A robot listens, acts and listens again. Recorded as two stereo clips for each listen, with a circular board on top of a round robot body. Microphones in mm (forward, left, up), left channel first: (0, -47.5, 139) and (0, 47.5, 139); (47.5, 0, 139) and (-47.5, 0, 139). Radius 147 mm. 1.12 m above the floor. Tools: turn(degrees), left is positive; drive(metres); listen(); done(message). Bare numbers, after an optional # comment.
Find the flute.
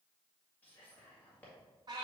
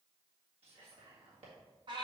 listen()
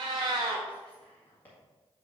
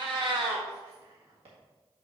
listen()
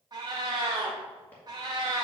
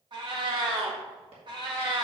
done("I can't make out a flute, only whispering and a cat meowing.")